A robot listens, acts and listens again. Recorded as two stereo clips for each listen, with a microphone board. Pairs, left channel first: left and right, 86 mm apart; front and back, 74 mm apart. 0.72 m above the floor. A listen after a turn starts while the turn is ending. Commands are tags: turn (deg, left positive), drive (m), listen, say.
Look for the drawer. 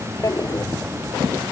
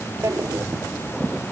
<turn deg="135"/>
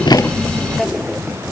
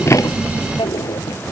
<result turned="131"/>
<say>Facing the drawer.</say>